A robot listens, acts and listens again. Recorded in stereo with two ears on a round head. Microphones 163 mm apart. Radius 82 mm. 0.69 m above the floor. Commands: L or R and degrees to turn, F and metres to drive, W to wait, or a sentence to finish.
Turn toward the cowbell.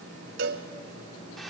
R60
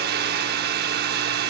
W
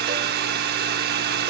W
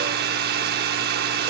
I heard a cowbell, but can't make it out now. It was about straight ahead or 60° right.